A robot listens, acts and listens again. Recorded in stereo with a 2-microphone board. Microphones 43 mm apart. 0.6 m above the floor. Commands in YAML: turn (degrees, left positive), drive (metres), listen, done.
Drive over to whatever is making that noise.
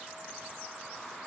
listen: true
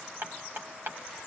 turn: -55
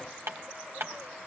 turn: -70
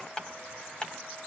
turn: 20
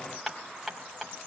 drive: 1.0
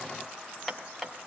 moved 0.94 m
drive: 1.0
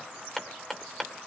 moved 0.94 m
turn: 10
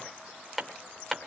drive: 1.0
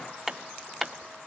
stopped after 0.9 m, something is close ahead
done: "I am next to the hammering."